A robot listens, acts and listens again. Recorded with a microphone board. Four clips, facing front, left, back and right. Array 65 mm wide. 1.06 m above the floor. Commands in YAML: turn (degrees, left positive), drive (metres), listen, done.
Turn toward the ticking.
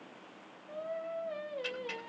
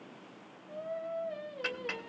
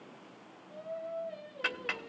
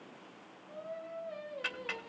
turn: 175
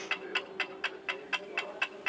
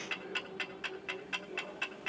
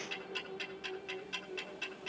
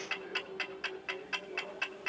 turn: -10
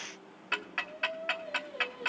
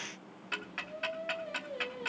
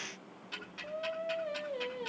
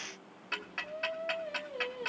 done: "Found it: ticking, straight ahead, 1 to 2 m away."